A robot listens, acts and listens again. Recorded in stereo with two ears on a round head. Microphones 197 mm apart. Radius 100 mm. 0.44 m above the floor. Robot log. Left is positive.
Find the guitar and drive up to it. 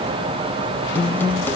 cmd yaw +30
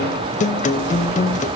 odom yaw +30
note: So it is at 135° left.
cmd yaw +135
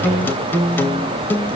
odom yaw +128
note: The guitar is now 10° left.
cmd yaw +10
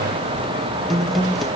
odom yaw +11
cmd fwd 1.0
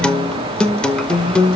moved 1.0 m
cmd fwd 1.0
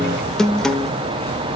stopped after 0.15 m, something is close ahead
end: I am next to the guitar.